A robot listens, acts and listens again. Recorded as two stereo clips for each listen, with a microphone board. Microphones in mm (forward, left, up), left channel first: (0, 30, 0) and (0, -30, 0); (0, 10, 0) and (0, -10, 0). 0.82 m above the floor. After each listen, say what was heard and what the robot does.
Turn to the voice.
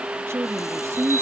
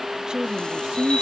The woman speaking: about 45° right or 135° right. Turn 45° right.
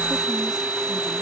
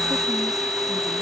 Keep listening.
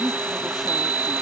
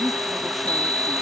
So it is at 10° right. Turn 10° right.
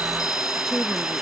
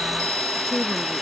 Keep listening.
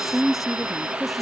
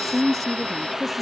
Found it: a woman speaking, straight ahead.